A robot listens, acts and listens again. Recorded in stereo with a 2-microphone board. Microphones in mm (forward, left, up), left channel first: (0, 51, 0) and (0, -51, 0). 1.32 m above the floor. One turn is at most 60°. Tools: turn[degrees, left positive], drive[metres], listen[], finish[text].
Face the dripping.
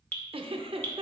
Action: turn[30]
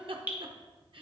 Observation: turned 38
Thought: So it is at 20° right.
Action: turn[-20]
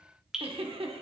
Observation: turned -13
Action: finish[Facing the dripping.]